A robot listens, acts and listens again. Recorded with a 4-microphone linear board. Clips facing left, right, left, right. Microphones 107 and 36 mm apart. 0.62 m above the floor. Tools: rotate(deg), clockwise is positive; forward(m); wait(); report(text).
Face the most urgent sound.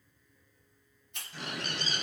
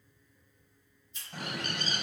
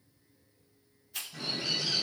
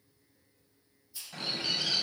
wait()
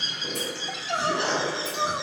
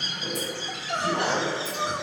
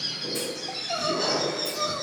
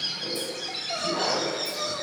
rotate(-30)
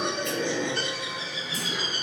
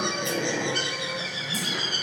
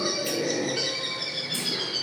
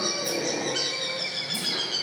wait()
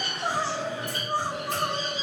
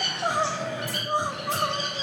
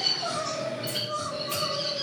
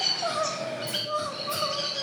rotate(20)
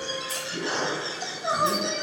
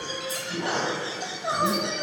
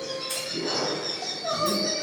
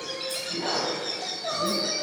report("Found it: crying, straight ahead.")